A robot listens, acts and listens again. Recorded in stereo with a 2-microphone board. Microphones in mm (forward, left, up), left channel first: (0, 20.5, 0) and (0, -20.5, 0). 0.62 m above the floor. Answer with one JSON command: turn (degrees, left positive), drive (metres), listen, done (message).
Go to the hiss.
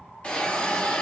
{"turn": 30}
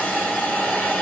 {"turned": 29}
{"turn": 115}
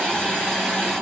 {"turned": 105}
{"turn": 10}
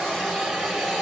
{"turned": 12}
{"drive": 1.0}
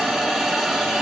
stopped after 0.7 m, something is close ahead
{"done": "I am next to the hiss."}